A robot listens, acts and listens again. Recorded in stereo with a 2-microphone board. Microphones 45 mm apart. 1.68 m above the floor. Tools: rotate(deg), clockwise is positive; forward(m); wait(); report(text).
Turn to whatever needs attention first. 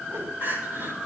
rotate(45)
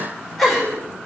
report("Facing the crying.")